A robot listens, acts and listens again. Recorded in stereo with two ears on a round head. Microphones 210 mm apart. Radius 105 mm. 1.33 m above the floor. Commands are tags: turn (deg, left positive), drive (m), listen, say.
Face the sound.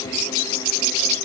<listen/>
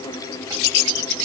<listen/>
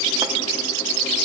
<say>I can't make out anything.</say>